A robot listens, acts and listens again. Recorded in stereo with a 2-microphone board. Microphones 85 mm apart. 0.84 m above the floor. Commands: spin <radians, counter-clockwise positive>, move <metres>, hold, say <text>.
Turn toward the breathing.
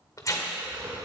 spin -0.44
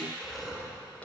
say Facing the breathing.